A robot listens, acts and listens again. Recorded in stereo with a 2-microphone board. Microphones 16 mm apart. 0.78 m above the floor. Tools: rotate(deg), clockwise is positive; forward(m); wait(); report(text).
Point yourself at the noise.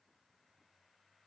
wait()
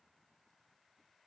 wait()
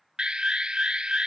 rotate(65)
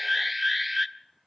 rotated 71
report("Facing the alarm.")